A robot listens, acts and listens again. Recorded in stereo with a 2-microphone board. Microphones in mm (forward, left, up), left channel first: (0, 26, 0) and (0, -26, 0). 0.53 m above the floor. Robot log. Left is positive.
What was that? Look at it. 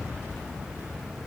cmd idle
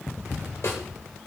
note: The snare drum: about 65° left or 115° left.
cmd yaw +65
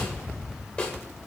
note: So it is at 25° left.
cmd yaw +25
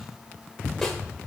note: The snare drum is now 10° left.
cmd yaw +10
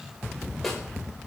end: Found it: a snare drum, straight ahead.